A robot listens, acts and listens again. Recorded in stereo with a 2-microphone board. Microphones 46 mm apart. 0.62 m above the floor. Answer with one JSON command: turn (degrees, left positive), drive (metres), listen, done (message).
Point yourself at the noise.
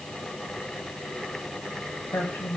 {"turn": 70}
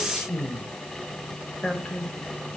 {"turn": 15}
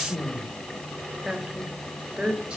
{"turn": -20}
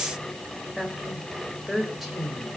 {"done": "Found it: a woman speaking, straight ahead."}